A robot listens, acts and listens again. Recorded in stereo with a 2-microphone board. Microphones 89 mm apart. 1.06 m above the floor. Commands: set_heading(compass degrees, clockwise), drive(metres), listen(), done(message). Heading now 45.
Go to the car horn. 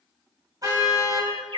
set_heading(90)
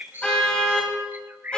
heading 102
set_heading(92)
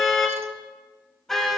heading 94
drive(1.0)
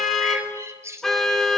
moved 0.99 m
drive(1.0)
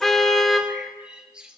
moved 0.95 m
drive(1.0)
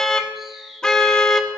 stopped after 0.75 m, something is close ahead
set_heading(84)
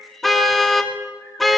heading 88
done("I am next to the car horn.")